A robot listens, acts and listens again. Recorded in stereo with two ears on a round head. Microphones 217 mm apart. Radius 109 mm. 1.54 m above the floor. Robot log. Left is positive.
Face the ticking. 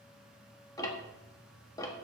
cmd yaw +30
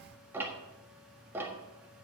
note: So it is at 10° right.
cmd yaw -10
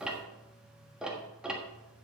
end: Facing the ticking, 1 to 2 m away.